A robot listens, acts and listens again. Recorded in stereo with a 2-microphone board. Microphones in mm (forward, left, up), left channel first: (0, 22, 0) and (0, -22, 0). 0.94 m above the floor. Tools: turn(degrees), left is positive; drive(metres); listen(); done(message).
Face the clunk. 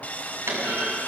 turn(degrees=-75)
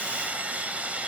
listen()
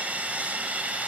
done("I heard a clunk, but can't make it out now. It was about straight ahead or 30° right.")